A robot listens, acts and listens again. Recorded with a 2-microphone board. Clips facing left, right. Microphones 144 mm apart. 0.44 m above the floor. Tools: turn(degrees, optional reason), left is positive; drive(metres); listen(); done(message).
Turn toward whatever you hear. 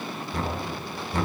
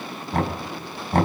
turn(degrees=-65, reason="The knocking: about 65° right or 115° right.")
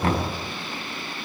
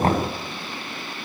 turn(degrees=-45, reason="So it is at 45° right.")
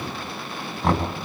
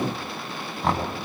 done("Found it: knocking, straight ahead.")